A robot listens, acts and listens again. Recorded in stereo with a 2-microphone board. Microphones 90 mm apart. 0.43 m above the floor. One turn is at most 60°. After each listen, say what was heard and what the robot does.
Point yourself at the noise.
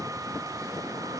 Keep listening.
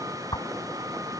The whoosh: about 60° left or 120° left. Turn 60° left.
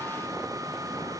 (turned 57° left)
Keep listening.
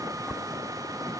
Found it: a whoosh, straight ahead.